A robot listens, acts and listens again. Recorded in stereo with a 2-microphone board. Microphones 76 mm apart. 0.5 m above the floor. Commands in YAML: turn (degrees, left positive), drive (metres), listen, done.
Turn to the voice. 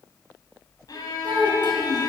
turn: -90
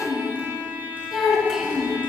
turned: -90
done: "Facing the child speaking."